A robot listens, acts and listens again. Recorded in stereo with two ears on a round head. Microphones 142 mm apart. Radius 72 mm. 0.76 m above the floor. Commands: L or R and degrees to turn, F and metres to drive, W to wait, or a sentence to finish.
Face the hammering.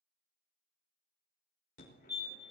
W
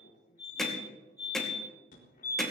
L30
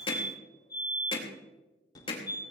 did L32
L145
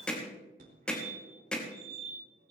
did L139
Found it: hammering, straight ahead.